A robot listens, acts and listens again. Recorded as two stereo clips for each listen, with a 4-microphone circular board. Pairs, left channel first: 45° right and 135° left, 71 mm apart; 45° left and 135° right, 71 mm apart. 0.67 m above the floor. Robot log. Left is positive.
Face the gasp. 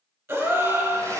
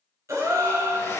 note: The gasp: straight behind.
cmd yaw +180
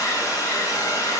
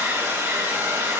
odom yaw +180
end: I heard a gasp from this way, but can't make it out now.